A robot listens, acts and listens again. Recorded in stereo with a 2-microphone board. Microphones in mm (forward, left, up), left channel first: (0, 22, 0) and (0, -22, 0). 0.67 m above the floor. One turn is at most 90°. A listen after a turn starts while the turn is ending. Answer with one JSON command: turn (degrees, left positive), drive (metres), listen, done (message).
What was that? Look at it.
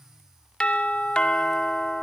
{"turn": 25}
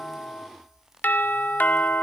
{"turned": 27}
{"turn": 90}
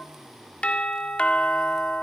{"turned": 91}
{"turn": 35}
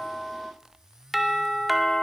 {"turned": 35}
{"done": "Facing the doorbell."}